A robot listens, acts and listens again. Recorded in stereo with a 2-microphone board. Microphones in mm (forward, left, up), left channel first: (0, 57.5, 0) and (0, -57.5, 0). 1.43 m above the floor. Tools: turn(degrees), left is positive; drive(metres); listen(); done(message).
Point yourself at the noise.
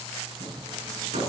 turn(degrees=-90)
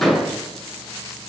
done("Found it: hammering, straight ahead, over 4 m away.")